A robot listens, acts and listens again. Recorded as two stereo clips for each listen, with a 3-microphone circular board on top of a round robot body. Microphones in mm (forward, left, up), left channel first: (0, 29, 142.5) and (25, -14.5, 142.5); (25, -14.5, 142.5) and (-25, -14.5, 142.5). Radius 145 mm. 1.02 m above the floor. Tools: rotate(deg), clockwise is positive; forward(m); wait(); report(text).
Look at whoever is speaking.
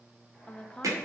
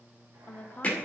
rotate(-50)
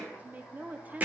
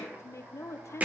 report("Found it: a woman speaking, straight ahead, under 1 m away.")